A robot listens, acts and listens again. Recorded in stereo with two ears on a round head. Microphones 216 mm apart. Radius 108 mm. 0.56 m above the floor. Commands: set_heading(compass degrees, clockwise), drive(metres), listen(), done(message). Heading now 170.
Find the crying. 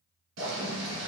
listen()
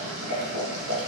listen()
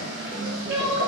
set_heading(215)
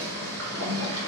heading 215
listen()
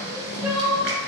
set_heading(225)
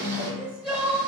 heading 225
done("Found it: crying, straight ahead, 1 to 2 m away.")